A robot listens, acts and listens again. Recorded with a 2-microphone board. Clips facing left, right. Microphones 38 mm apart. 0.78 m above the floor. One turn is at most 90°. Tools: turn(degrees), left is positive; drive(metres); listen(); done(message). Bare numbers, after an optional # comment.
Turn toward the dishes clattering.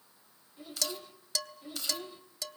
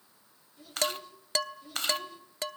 # The dishes clattering: about 45° right or 135° right.
turn(-45)
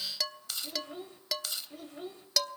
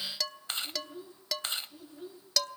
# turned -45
done("Found it: dishes clattering, straight ahead.")